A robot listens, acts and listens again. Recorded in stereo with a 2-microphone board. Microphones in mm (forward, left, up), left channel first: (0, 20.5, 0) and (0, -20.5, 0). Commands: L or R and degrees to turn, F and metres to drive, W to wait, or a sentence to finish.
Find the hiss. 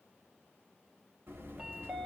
W
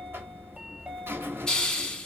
L20
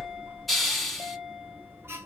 Facing the hiss, under 1 m away.